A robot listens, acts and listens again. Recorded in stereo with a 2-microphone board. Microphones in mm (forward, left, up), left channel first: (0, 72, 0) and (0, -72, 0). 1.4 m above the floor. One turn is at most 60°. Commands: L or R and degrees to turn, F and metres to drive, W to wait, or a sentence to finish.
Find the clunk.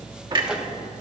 R35
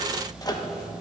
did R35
W
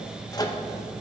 I heard a clunk, but can't make it out now. It was about straight ahead or 110° right.